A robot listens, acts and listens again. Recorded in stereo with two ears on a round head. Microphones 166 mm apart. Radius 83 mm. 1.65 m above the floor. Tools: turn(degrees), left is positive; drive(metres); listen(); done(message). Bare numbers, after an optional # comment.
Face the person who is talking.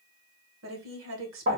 turn(-90)
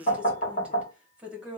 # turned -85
done("Found it: a woman speaking, straight ahead, 1 to 2 m away.")